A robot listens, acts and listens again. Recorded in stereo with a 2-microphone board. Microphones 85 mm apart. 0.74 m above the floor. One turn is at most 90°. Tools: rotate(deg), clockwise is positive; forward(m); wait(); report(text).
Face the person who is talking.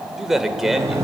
rotate(30)
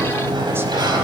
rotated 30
wait()
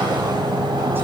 wait()
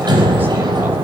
report("I heard a man speaking, but can't make it out now. It was about 25° left or 145° right.")